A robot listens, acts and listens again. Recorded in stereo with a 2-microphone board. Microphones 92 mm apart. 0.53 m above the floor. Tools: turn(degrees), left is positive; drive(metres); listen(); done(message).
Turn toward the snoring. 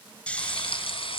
turn(degrees=30)
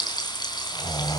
turn(degrees=135)
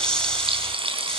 turn(degrees=10)
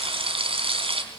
listen()
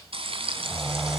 done("Found it: snoring, straight ahead.")